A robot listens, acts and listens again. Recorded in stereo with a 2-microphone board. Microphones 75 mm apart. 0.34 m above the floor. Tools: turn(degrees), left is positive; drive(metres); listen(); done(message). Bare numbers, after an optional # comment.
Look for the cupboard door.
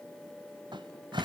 turn(-90)
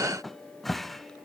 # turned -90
done("Found it: a cupboard door, straight ahead.")